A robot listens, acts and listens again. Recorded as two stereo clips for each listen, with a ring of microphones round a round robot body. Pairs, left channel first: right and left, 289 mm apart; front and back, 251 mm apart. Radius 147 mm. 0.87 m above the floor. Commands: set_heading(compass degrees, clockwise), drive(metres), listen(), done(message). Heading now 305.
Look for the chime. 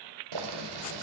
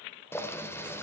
listen()
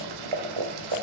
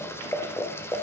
listen()
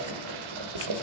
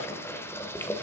done("I can't make out a chime, only boiling.")